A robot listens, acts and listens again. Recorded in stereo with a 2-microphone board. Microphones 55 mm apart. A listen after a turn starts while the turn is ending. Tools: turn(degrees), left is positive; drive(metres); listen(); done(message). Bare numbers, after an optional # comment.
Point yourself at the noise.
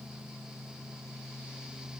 listen()
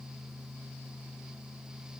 listen()
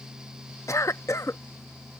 # The cough: about 65° left or 115° left.
turn(65)
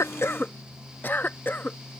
# So it is at 40° left.
turn(40)
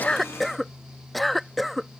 done("Facing the cough.")